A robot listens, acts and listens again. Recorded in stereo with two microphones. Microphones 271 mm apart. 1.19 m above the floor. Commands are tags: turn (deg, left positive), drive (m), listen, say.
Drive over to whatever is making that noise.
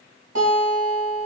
<turn deg="-65"/>
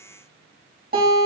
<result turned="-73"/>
<turn deg="-35"/>
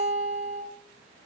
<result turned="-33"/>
<drive m="1.0"/>
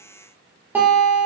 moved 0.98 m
<turn deg="-10"/>
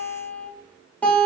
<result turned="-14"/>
<drive m="1.0"/>
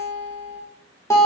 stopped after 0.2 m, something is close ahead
<turn deg="10"/>
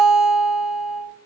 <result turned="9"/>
<say>Arrived at the guitar, straight ahead.</say>